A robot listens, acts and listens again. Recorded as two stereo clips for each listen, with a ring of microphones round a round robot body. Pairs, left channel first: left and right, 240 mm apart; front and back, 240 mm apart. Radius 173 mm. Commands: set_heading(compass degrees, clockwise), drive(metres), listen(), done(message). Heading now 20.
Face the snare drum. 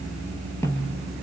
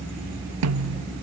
set_heading(205)
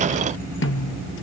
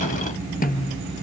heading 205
set_heading(150)
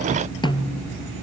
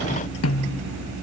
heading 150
set_heading(130)
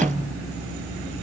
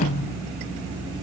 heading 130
done("Facing the snare drum, 1 to 2 m away.")